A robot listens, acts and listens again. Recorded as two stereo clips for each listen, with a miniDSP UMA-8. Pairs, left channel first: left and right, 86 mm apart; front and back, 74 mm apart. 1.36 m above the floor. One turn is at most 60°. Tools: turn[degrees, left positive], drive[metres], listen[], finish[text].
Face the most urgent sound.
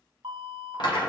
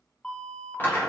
Thought: The alarm: 75° right.
Action: turn[-60]
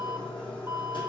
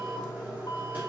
Thought: Nothing new. It was at 15° right.
Action: turn[-15]
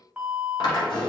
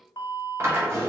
Thought: The alarm is now 15° right.
Action: turn[-15]
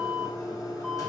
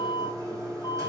Action: finish[Found it: an alarm, straight ahead.]